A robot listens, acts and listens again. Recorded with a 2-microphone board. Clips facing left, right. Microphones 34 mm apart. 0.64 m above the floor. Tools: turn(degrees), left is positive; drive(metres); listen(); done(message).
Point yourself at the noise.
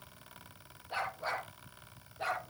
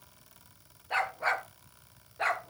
turn(degrees=-90)
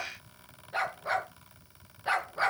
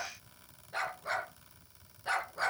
turn(degrees=20)
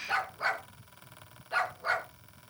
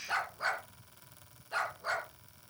turn(degrees=15)
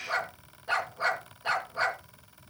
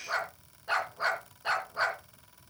done("Found it: a dog barking, straight ahead.")